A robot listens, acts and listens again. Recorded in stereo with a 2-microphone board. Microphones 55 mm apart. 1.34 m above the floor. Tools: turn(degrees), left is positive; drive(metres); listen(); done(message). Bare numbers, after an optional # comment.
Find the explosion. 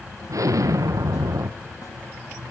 turn(-90)
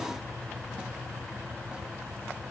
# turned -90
done("Facing where the explosion came from. I can't hear it now.")